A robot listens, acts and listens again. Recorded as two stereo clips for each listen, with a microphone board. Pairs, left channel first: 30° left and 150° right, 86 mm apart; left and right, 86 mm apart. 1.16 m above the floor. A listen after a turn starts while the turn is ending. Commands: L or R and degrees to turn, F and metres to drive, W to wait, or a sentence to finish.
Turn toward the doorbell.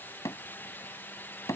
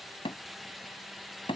W
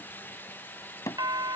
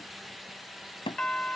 L170
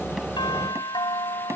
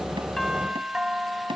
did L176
R10
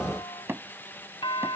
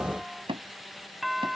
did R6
Found it: a doorbell, straight ahead.